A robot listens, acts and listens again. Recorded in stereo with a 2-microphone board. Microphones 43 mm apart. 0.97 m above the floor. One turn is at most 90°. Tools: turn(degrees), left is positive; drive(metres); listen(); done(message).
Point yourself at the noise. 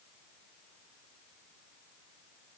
listen()
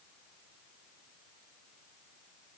listen()
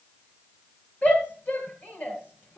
turn(degrees=35)
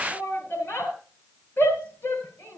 turn(degrees=90)
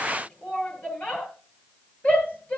turn(degrees=35)
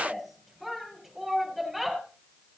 done("Found it: a shout, straight ahead.")